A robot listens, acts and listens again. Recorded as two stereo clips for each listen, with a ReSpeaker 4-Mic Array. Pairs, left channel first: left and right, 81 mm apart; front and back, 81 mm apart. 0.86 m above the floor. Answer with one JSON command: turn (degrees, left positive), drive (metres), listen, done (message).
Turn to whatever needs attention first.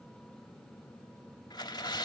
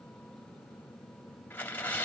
{"listen": true}
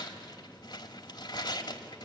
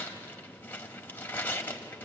{"listen": true}
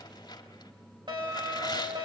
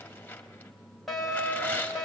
{"turn": -85}
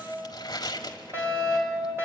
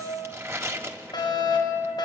{"turn": -30}
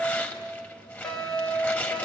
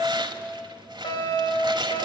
{"turn": 10}
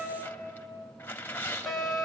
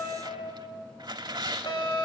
{"done": "Facing the fire alarm."}